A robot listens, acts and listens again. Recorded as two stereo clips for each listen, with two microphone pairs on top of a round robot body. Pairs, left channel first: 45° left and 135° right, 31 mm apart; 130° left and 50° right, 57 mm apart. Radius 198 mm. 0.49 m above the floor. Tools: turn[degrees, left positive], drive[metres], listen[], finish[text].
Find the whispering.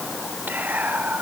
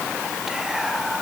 Thought: The whispering: 135° right.
Action: turn[-135]
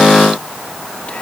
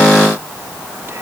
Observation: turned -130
Action: listen[]
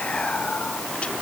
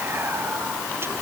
Action: finish[Facing the whispering, 2 to 4 m away.]